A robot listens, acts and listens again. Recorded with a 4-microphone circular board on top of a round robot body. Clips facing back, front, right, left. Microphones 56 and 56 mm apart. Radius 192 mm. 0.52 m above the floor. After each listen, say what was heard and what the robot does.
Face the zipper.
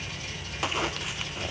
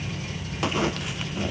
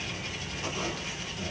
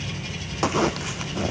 The zipper: 90° left. Turn 90° left.
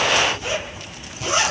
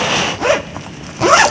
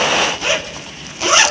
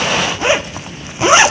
The zipper is now 20° left. Turn 20° left.
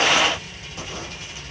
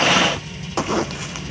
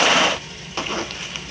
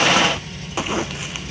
Found it: a zipper, straight ahead.